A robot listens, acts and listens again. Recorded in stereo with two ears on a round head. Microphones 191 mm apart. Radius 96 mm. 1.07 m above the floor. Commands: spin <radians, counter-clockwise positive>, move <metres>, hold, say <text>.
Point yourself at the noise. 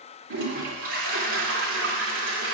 spin -1.13
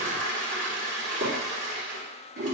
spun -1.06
spin -0.96
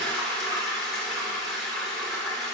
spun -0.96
say Facing the toilet flushing, 2 to 4 m away.